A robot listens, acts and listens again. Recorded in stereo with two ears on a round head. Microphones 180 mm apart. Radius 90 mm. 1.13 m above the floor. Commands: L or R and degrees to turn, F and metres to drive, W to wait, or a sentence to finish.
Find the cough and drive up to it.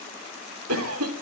R90
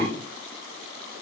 L10
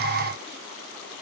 W
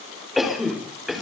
F1.0
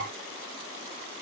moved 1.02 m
W
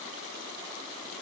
W
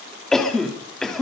F1.0
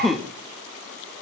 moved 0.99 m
F1.0
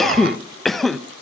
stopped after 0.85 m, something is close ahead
Arrived at the cough, straight ahead.